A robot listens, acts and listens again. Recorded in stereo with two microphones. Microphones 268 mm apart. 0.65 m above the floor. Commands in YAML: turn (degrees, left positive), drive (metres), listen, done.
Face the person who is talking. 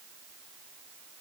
listen: true
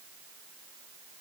listen: true
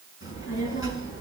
turn: 50
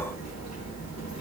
turn: 80
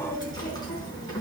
turn: 15
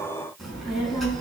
done: "Found it: a child speaking, straight ahead."